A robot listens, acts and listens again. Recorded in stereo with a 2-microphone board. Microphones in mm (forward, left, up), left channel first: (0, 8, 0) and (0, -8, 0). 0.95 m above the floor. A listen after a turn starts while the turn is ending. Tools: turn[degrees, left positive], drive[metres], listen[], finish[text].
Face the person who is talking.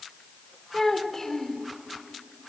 Thought: The child speaking: about 30° left or 150° left.
Action: turn[30]
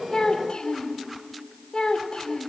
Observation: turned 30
Thought: So it is at 120° left.
Action: turn[120]
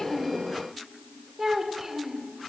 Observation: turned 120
Thought: The child speaking is now 25° right.
Action: turn[-25]
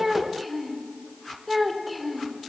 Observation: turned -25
Action: finish[Facing the child speaking.]